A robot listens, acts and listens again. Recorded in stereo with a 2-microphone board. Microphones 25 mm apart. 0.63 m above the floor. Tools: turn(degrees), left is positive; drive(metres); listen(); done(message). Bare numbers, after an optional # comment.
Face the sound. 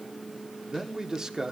# The man speaking: about 30° right or 150° right.
turn(-30)
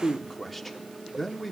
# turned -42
done("Facing the man speaking.")